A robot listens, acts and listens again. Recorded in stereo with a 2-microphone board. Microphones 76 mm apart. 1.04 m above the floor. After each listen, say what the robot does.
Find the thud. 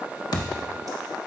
Turn 65° left.
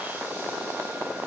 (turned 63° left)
Keep listening.
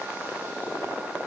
I heard a thud, but can't make it out now. It was about 5° left or 50° left.